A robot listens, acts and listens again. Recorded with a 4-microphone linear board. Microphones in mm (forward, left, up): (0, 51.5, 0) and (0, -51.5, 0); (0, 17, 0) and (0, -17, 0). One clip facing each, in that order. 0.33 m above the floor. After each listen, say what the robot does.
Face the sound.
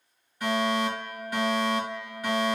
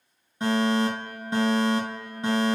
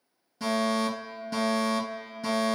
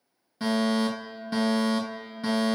Turn 25° right.
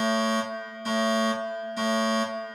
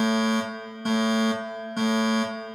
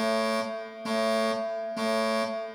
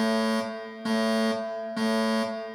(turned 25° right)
Turn 125° right.
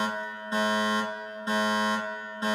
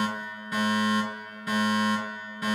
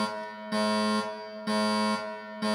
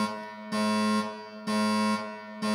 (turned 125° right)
Turn 30° left.
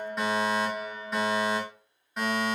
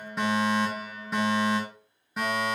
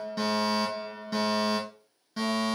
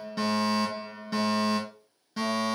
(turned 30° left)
Facing the fire alarm.